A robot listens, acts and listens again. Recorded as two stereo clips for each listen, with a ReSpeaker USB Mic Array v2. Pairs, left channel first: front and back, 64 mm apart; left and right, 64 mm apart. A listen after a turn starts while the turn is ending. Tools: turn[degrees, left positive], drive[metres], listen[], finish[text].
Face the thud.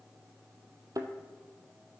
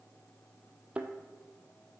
Thought: The thud: 155° right.
Action: turn[-155]
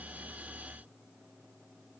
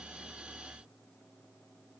Action: finish[I heard a thud from this way, but can't make it out now.]